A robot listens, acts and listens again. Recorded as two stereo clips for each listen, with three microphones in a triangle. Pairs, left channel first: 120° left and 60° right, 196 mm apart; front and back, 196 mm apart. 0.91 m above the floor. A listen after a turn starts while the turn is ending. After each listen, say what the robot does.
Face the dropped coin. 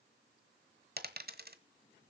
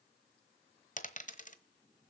Turn 40° right.
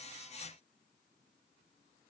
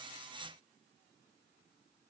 I heard a dropped coin from this way, but can't make it out now.